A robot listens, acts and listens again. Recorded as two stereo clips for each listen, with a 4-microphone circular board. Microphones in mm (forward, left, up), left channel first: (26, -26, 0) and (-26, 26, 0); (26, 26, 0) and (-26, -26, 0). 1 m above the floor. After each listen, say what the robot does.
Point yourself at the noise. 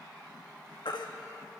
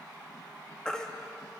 Turn 35° right.
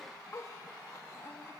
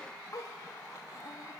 Keep listening.
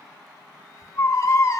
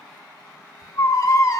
Facing the baby crying, 1 to 2 m away.